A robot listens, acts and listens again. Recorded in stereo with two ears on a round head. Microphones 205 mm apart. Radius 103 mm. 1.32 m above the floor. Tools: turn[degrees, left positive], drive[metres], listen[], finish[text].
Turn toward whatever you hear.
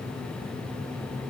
Action: listen[]
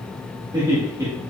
Action: turn[-30]
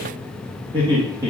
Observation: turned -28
Thought: The laughter: about 15° right or 165° right.
Action: turn[-15]
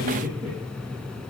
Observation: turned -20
Thought: The laughter: about 25° right or 155° right.
Action: turn[-25]
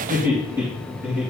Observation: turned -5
Action: turn[-30]
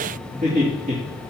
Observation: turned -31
Thought: So it is at 145° right.
Action: turn[-145]
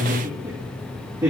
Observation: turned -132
Thought: The laughter is now 10° right.
Action: turn[-10]
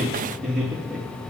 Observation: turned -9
Action: finish[Facing the laughter.]